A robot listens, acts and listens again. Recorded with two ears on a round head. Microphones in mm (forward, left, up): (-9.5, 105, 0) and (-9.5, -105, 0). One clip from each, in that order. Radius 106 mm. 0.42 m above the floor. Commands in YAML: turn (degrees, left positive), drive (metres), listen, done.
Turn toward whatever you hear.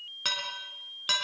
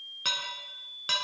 turn: 30
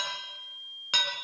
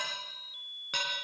turn: 140
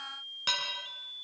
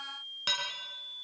done: "Found it: dishes clattering, straight ahead, over 4 m away."